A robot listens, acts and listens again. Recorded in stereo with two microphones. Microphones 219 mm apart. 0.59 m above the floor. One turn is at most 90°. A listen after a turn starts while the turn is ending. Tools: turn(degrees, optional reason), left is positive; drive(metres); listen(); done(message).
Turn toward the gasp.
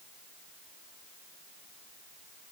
listen()
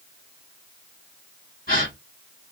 turn(degrees=40, reason="The gasp: about 40° left or 140° left.")
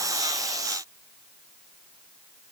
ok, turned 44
listen()
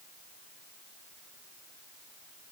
done("I heard a gasp, but can't make it out now. It was about 5° right or 95° left.")